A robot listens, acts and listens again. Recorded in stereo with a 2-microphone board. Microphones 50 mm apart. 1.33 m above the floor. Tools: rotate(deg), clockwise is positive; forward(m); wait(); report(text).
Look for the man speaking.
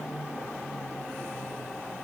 wait()
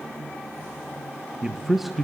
rotate(-30)
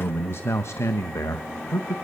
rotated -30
rotate(-90)
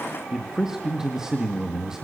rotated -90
rotate(10)
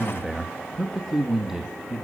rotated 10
report("Facing the man speaking, 1 to 2 m away.")